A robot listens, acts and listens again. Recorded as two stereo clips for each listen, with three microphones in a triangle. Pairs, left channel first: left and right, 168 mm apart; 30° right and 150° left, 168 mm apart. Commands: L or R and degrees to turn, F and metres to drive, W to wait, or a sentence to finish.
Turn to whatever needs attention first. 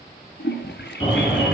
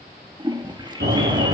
L145
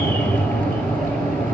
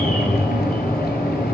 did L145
L10
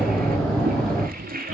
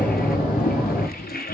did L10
Facing the alarm.